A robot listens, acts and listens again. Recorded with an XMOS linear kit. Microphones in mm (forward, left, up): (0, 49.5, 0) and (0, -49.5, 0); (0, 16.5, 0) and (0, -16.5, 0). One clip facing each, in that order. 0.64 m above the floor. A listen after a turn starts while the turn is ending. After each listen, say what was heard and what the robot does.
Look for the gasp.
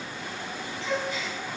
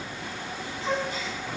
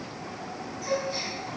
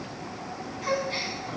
The gasp: about 45° right or 135° right. Turn 45° right.
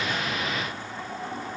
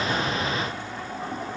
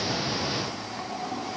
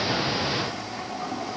Keep listening.
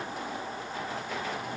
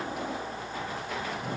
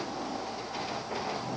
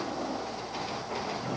I heard a gasp, but can't make it out now. It was about straight ahead or 90° right.